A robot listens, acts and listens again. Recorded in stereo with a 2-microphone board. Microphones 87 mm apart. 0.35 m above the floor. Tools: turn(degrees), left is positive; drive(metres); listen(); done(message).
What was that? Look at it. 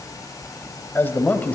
turn(degrees=20)
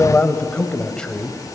turn(degrees=30)
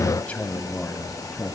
turn(degrees=30)
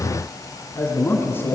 turn(degrees=25)
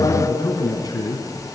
turn(degrees=130)
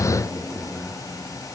turn(degrees=15)
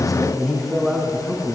done("Found it: a man speaking, straight ahead.")